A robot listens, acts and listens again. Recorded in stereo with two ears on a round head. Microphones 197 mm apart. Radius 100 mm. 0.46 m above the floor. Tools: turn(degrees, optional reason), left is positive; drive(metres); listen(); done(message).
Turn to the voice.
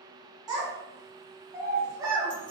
turn(degrees=-20, reason="The child speaking: about 20° right or 160° right.")
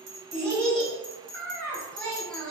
done("Facing the child speaking, 1 to 2 m away.")